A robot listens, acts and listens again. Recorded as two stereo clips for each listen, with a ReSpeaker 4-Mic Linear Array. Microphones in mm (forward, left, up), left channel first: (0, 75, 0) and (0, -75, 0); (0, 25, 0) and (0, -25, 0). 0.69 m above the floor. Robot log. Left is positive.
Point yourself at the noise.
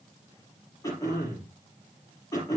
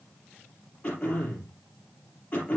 note: The throat clearing: about 25° left or 155° left.
cmd yaw +25
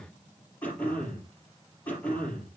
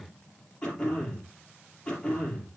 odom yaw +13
note: So it is at 10° left.
cmd yaw +10
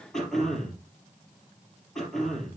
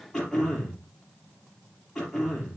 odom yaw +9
end: Found it: throat clearing, straight ahead.